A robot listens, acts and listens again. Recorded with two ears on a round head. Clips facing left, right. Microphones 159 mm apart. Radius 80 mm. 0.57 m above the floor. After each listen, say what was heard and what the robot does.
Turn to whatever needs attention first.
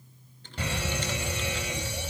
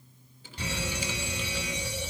The fire alarm: about 50° left or 130° left. Turn 50° left.
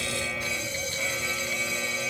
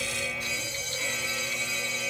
So it is at 70° left. Turn 70° left.
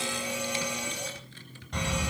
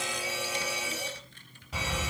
Facing the fire alarm.